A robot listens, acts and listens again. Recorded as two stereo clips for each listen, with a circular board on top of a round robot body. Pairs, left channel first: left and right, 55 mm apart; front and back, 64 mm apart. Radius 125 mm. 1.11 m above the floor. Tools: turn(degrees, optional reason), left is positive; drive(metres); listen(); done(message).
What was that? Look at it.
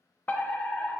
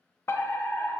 turn(degrees=35, reason="The fire alarm: 35° left.")
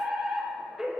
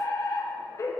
turn(degrees=-10, reason="The fire alarm is now 10° right.")
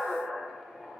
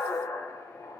done("Found it: a fire alarm, straight ahead, 1 to 2 m away.")